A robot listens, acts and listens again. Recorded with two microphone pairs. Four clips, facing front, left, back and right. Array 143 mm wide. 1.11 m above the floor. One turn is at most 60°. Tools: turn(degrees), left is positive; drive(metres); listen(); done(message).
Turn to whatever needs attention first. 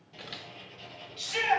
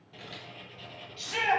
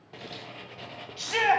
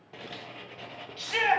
turn(degrees=-60)
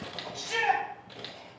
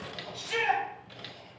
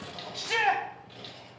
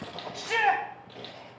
turn(degrees=-60)
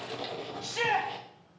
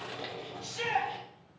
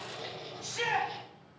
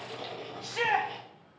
turn(degrees=-55)
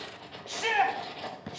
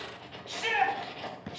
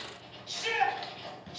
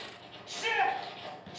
done("Facing the shout, 1 to 2 m away.")